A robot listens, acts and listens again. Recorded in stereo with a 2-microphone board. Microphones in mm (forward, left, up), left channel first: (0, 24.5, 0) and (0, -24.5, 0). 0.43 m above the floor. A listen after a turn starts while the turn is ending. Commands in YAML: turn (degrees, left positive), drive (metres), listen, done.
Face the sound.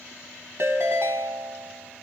turn: -60
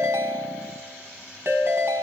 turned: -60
turn: -55
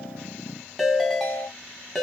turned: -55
done: "Found it: a ringtone, straight ahead, 1 to 2 m away."